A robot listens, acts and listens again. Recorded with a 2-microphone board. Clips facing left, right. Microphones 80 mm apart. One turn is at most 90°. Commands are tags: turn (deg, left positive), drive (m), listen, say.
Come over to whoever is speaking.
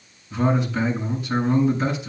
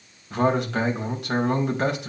<turn deg="-90"/>
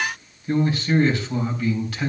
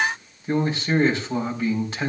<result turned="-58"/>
<turn deg="-25"/>
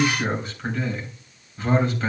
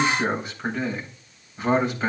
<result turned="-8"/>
<turn deg="-20"/>
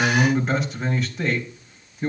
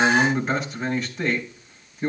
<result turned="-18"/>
<drive m="1.0"/>
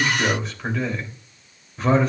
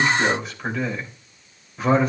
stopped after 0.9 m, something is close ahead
<say>Blocked. The man speaking is further on, straight ahead.</say>